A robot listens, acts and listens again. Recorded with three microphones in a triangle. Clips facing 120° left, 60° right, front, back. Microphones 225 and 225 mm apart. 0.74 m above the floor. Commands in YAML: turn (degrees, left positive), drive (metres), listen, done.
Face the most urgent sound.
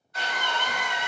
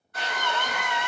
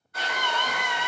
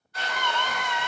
turn: -75
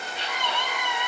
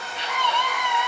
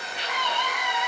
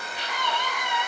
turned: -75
done: "Facing the scream."